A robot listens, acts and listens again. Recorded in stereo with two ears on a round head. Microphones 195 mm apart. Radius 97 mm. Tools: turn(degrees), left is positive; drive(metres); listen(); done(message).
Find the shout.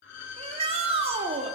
turn(degrees=-30)
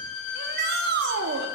turn(degrees=-115)
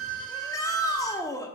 turn(degrees=20)
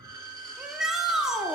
done("Found it: a shout, straight ahead.")